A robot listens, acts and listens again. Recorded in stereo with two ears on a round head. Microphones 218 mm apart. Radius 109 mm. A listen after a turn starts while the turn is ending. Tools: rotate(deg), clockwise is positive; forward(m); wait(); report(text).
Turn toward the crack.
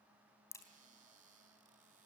rotate(-30)
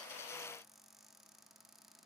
wait()
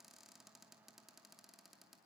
report("I heard a crack, but can't make it out now. It was about 20° right or 140° left.")